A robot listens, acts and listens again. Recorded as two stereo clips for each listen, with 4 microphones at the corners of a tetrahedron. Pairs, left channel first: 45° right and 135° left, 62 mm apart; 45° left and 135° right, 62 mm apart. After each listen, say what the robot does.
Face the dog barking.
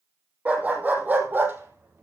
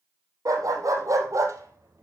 Turn 170° right.
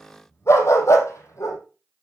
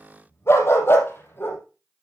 Turn 10° right.
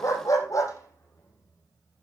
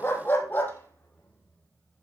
Turn 15° right.
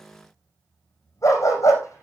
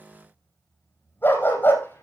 Turn 10° right.
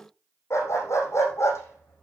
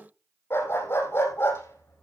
Found it: a dog barking, straight ahead, over 4 m away.